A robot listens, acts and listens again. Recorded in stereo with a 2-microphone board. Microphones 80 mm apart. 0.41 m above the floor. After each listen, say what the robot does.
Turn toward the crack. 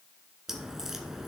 Turn 30° right.
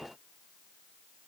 Keep listening.
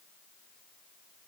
I heard a crack, but can't make it out now. It was about 25° left or 145° right.